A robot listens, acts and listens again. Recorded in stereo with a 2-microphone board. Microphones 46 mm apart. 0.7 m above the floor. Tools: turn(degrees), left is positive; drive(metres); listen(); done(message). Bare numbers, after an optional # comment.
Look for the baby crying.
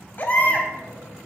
# The baby crying: about 40° left or 140° left.
turn(40)
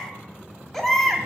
done("Found it: a baby crying, straight ahead, 1 to 2 m away.")